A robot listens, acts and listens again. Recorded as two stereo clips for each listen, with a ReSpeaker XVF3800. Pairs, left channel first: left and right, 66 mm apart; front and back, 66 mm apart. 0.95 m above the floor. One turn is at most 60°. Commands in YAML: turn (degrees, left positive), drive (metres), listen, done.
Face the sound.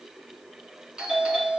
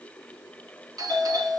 turn: -60
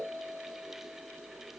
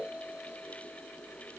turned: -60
turn: -60
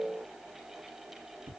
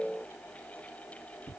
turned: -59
turn: -50
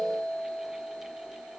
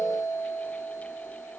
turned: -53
done: "Facing the doorbell."